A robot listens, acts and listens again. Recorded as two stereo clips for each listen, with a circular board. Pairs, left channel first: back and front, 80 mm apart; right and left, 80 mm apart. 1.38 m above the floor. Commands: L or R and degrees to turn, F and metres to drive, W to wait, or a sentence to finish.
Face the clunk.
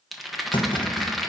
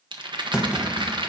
L170
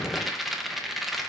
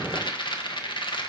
I heard a clunk from this way, but can't make it out now.